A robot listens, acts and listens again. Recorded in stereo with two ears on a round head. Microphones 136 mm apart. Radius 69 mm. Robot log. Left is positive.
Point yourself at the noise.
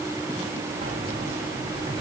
note: The keys jangling: about 30° right or 150° right.
cmd yaw -30
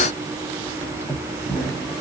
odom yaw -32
note: So it is at 20° left.
cmd yaw +20
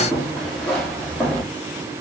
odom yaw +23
end: Facing the keys jangling.